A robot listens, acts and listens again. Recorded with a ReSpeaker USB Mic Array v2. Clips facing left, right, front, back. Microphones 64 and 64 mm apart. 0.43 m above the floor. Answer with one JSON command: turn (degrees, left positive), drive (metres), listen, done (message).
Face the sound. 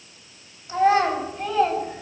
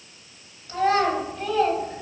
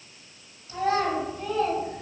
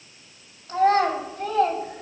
{"turn": 175}
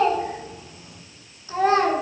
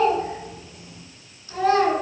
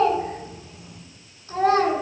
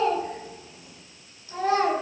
{"turn": 40}
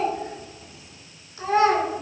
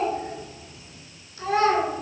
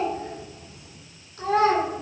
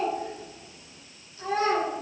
{"turn": 25}
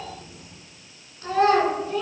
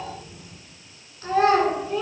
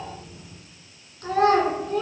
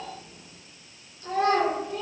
{"done": "Facing the child speaking."}